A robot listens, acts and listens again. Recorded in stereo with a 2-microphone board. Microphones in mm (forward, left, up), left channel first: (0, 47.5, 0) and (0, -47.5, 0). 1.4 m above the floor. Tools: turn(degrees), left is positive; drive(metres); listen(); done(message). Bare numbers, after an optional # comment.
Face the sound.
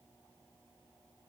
listen()
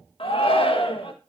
# The shout: about 70° left or 110° left.
turn(70)
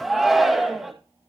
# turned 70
done("Found it: a shout, straight ahead.")